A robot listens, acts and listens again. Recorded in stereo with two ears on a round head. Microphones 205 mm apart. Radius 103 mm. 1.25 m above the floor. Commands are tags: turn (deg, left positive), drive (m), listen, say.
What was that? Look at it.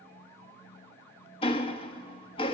<turn deg="25"/>
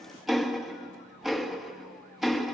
<say>Facing the ticking, 1 to 2 m away.</say>